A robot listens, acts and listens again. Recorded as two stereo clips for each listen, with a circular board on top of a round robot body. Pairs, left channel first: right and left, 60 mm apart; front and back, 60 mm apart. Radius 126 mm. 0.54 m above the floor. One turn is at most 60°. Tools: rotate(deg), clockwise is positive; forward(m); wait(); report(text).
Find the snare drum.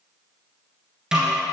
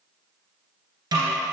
rotate(-60)
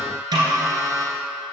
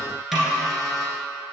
rotate(-60)
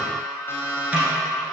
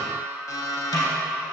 rotate(-20)
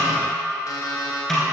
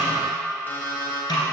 report("Facing the snare drum.")